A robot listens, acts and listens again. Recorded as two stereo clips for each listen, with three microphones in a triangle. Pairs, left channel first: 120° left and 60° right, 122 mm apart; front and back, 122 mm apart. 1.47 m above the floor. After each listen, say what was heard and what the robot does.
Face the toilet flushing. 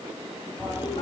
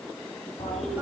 The toilet flushing: 15° left. Turn 15° left.
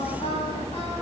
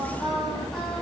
Found it: a toilet flushing, straight ahead.